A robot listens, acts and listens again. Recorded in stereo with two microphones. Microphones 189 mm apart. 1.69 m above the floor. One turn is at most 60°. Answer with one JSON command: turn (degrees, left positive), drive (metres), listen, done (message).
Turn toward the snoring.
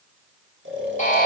{"turn": -60}
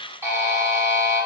{"turn": -30}
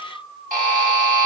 {"done": "Found it: snoring, straight ahead."}